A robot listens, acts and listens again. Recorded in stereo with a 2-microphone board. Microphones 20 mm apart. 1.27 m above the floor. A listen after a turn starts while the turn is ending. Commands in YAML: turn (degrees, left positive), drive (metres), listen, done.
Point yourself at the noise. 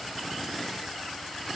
listen: true
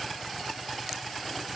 listen: true
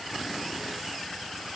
done: "I can't make out anything."